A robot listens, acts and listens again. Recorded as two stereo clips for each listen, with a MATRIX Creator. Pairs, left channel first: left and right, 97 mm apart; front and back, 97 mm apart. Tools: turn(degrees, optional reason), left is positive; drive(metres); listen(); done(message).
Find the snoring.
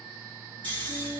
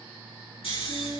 turn(degrees=20, reason="The snoring: 20° left.")
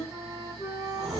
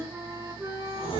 done("Found it: snoring, straight ahead, 1 to 2 m away.")